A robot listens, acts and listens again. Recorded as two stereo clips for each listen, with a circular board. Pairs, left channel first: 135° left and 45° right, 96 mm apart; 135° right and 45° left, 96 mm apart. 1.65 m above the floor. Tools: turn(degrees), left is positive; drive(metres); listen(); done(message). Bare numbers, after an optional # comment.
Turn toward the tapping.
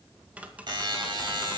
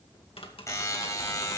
# The tapping: 120° right.
turn(-120)
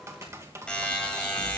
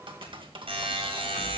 # The tapping is now 15° left.
turn(15)
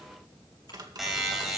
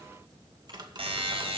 done("Facing the tapping, 1 to 2 m away.")